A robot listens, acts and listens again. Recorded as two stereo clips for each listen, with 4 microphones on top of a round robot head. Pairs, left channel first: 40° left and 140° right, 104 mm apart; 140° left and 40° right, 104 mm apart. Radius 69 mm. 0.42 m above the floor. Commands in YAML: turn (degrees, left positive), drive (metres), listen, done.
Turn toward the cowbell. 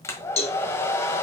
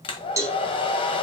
turn: 20
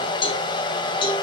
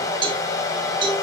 done: "Facing the cowbell, 2 to 4 m away."